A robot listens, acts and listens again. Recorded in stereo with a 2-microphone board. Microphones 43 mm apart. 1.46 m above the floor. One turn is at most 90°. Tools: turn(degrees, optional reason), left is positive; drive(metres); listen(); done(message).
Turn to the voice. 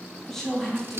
turn(degrees=30)
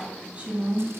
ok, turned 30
turn(degrees=-25, reason="So it is at 25° right.")
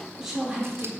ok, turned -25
turn(degrees=-10, reason="The woman speaking is now 10° right.")
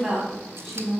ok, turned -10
done("Found it: a woman speaking, straight ahead.")